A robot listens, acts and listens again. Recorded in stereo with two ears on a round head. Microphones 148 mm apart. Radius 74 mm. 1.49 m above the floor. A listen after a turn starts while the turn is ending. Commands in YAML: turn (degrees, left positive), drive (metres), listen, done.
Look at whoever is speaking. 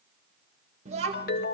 turn: -40
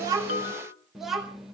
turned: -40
done: "Found it: a child speaking, straight ahead, 1 to 2 m away."